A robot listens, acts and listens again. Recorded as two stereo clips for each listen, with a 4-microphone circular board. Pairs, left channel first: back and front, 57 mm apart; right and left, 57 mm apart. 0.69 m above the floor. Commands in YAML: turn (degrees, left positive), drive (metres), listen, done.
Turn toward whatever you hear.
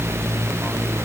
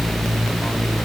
listen: true
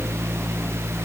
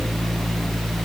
listen: true
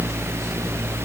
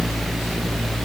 done: "I can't make out anything to turn to."